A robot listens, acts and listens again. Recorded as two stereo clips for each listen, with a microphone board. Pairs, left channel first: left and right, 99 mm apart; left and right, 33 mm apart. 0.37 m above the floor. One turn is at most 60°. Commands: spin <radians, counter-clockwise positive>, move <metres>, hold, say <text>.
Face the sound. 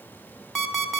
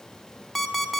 spin 0.52
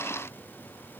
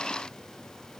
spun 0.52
spin 1.05
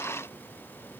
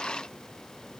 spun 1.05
spin 1.05
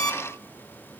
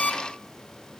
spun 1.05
spin 0.70
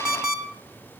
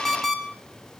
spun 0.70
spin -0.17
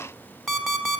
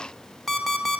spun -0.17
say Facing the alarm clock.